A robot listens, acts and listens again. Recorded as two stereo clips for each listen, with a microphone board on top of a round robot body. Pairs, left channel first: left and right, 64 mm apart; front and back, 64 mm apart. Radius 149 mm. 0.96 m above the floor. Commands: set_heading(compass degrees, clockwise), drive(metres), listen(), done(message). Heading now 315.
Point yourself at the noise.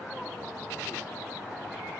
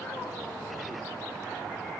listen()
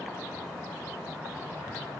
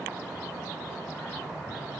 listen()
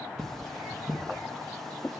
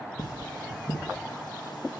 done("Facing the cutlery clinking.")